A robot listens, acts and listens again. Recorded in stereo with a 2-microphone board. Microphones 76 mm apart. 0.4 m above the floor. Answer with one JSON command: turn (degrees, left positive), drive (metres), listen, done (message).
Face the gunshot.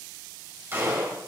{"turn": -30}
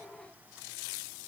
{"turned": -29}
{"listen": true}
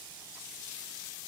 {"done": "I heard a gunshot, but can't make it out now. It was about straight ahead or 120° right."}